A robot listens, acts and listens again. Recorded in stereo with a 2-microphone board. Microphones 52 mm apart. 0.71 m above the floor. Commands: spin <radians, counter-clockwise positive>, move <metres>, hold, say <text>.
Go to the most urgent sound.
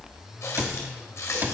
hold
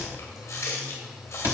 hold
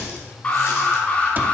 spin 0.52
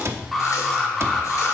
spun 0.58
move 1.0
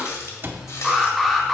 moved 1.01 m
move 1.0
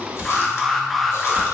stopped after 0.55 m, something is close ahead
say I am next to the alarm.